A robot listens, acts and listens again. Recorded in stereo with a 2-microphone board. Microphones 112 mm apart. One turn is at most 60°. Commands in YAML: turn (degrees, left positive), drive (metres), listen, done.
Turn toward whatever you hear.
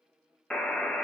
turn: 30
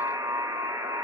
turn: -25
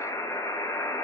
turn: 30
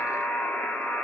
turn: 15
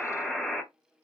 done: "Facing the buzzer, under 1 m away."